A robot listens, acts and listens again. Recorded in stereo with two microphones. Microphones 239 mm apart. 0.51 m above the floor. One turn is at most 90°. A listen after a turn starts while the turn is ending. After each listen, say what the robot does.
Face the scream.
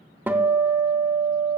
Keep listening.
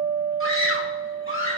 Turn 60° left.
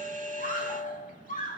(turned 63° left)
Turn 40° left.
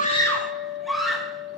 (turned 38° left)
Found it: a scream, straight ahead, 2 to 4 m away.